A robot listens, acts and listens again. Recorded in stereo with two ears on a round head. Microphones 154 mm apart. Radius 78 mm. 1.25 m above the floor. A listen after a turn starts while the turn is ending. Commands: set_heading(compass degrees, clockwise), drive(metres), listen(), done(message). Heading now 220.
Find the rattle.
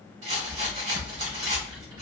set_heading(265)
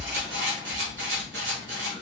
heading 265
set_heading(0)
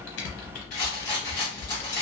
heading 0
set_heading(340)
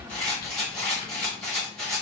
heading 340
done("Found it: a rattle, straight ahead, 1 to 2 m away.")